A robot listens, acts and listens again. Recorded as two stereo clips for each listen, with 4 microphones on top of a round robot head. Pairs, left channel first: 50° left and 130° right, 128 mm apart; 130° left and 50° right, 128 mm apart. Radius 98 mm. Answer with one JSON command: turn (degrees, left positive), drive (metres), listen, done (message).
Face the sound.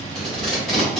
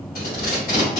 {"turn": 140}
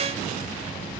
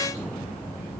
{"listen": true}
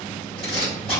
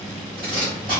{"done": "Found it: tape being pulled, straight ahead, 1 to 2 m away."}